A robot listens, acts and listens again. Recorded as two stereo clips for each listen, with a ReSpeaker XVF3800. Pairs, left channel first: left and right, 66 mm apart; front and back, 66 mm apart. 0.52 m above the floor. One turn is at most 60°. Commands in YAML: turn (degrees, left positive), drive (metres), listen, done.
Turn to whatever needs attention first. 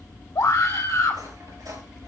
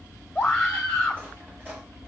turn: 60
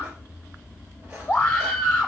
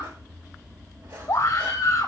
turn: 45
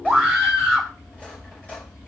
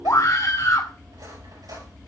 done: "Found it: a scream, straight ahead."